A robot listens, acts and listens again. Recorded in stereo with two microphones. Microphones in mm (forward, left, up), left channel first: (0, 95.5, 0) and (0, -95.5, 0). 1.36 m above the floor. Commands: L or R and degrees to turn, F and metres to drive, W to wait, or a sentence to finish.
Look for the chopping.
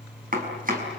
R50
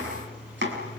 R80
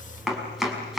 Facing the chopping.